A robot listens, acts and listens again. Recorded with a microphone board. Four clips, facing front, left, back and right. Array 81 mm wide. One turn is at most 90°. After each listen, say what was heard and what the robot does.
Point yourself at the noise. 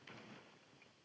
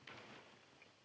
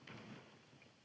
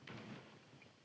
Keep listening.
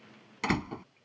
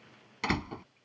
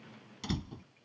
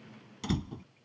The door slam: 35° left. Turn 35° left.
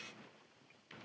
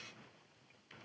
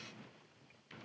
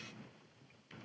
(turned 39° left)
Facing where the door slam came from. I can't hear it now.